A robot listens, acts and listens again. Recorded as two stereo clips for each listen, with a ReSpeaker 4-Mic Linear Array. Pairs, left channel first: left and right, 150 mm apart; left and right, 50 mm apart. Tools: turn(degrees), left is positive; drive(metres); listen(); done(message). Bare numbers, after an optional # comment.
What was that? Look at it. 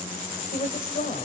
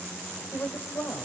# The woman speaking: about 60° left or 120° left.
turn(60)
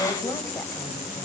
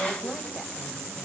# So it is at 15° left.
turn(15)
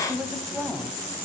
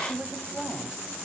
done("Facing the woman speaking.")